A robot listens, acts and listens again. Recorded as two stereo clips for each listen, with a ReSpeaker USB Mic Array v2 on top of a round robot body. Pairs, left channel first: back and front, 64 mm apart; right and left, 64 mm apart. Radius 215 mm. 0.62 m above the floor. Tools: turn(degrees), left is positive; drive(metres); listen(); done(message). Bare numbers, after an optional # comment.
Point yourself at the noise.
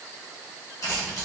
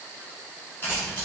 # The keys jangling: 150° right.
turn(-150)
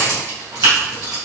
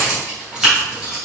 # The keys jangling is now 10° left.
turn(10)
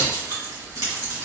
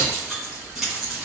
done("Facing the keys jangling.")